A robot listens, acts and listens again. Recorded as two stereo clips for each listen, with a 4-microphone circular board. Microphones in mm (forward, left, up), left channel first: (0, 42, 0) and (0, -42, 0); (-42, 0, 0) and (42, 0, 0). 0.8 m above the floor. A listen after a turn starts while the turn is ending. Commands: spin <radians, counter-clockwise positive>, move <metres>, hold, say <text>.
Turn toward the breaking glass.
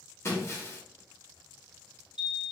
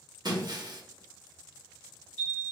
spin 0.52
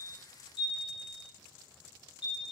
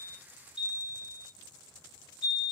say Facing where the breaking glass came from. I can't hear it now.